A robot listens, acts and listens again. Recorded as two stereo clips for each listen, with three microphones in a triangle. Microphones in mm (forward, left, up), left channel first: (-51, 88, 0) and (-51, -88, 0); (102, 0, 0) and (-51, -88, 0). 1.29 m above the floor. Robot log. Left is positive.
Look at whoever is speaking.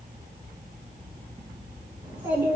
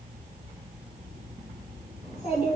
note: The child speaking: 25° right.
cmd yaw -25
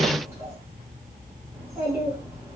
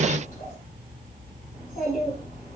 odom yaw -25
note: The child speaking is now 15° right.
cmd yaw -15
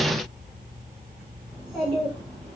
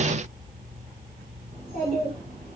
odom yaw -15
end: Facing the child speaking, 2 to 4 m away.